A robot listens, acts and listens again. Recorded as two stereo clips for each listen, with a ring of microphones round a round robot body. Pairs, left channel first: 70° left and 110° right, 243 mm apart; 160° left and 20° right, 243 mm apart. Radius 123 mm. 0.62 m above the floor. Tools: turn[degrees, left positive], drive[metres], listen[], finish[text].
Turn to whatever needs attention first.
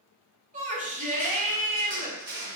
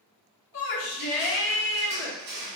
Thought: The shout: 170° right.
Action: turn[-170]
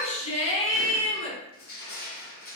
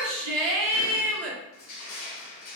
Action: finish[Found it: a shout, straight ahead, 1 to 2 m away.]